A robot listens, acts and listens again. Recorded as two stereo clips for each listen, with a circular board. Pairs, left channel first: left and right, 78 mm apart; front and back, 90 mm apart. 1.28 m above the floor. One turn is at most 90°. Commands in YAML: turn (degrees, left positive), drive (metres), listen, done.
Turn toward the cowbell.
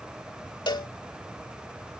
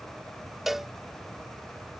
turn: 90
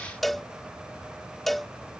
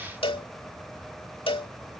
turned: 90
done: "Found it: a cowbell, straight ahead."